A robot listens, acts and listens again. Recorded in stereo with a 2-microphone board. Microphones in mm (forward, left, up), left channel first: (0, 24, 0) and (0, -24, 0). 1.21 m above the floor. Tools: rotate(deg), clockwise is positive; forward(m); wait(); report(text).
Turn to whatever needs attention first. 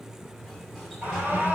rotate(35)
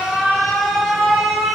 report("Found it: an alarm, straight ahead, over 4 m away.")